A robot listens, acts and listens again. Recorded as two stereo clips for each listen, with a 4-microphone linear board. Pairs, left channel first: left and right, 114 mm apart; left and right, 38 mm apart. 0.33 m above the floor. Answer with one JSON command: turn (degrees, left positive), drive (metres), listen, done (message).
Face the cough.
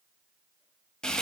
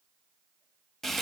{"listen": true}
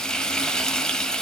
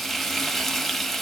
{"listen": true}
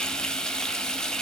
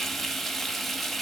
{"done": "I can't make out a cough to turn to."}